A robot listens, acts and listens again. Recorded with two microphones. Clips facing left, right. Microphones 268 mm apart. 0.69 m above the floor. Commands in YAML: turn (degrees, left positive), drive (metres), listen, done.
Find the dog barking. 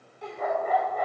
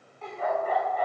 turn: 55
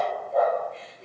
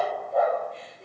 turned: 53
done: "Found it: a dog barking, straight ahead."